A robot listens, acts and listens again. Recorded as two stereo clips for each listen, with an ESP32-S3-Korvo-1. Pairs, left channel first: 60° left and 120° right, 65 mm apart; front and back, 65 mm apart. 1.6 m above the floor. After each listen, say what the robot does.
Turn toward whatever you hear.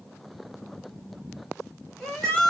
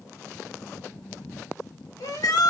Turn 15° right.
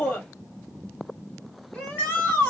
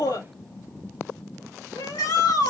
Found it: a shout, straight ahead.